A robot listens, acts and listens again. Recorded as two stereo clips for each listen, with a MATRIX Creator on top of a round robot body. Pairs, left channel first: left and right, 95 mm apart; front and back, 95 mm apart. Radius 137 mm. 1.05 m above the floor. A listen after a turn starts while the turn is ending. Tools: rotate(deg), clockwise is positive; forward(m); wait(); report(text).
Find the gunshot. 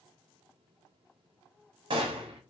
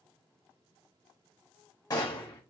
rotate(55)
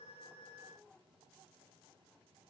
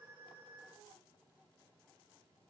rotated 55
report("I heard a gunshot from this way, but can't make it out now.")